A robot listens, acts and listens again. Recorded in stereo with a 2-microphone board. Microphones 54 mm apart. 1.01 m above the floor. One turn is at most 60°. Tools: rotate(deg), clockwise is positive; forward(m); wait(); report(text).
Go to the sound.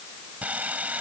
rotate(30)
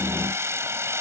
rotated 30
rotate(60)
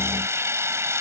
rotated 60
rotate(60)
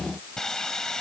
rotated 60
rotate(-10)
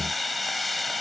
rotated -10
forward(1.0)
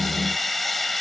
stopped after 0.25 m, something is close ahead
report("Something is in my way. I am facing the sawing but have not reached it.")